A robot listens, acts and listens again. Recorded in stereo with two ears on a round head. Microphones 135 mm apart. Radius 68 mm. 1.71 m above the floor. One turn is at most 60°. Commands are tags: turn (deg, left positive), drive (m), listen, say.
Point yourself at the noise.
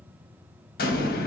<turn deg="60"/>
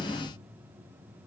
<turn deg="40"/>
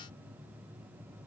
<say>I heard an explosion from this way, but can't make it out now.</say>